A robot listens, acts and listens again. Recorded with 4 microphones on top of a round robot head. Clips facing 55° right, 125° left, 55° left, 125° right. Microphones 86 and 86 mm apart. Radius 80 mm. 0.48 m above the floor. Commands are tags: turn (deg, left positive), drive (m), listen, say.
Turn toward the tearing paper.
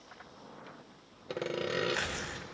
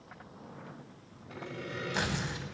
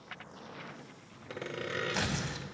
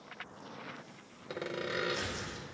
<turn deg="50"/>
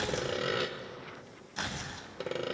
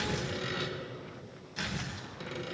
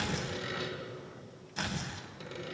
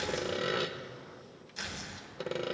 <say>Found it: tearing paper, straight ahead, under 1 m away.</say>